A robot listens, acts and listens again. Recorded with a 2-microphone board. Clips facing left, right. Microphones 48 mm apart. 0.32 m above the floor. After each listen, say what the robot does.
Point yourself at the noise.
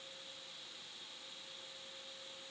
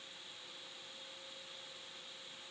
Keep listening.
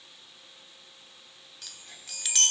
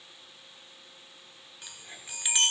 Turn 15° right.
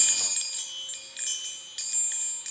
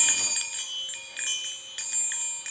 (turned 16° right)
Turn 150° right.
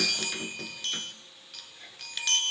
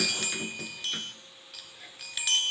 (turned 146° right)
Facing the chime, 1 to 2 m away.